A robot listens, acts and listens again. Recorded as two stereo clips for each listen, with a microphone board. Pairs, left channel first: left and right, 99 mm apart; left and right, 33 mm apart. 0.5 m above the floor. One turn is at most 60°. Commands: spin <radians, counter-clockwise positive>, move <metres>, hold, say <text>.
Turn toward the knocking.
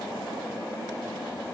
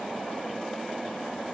hold
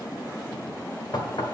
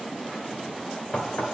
spin 0.79
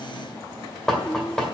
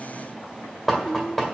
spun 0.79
say Facing the knocking.